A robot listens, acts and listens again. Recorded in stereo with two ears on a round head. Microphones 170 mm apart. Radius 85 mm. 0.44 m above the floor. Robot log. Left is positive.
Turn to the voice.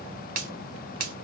cmd idle
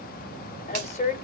note: The woman speaking: about 35° left or 145° left.
cmd yaw +35
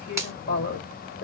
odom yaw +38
note: So it is at 100° left.
cmd yaw +100
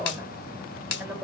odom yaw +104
end: Facing the woman speaking, 1 to 2 m away.